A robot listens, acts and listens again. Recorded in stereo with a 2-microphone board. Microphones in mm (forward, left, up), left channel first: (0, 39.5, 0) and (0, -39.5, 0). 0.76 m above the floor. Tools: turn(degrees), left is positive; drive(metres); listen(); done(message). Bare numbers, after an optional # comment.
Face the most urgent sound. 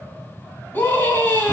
# The scream: about 25° left or 155° left.
turn(25)
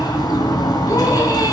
listen()
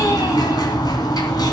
listen()
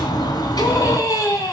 # So it is at 130° left.
turn(130)
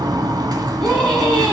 # The scream is now 10° left.
turn(10)
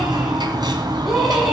done("Facing the scream.")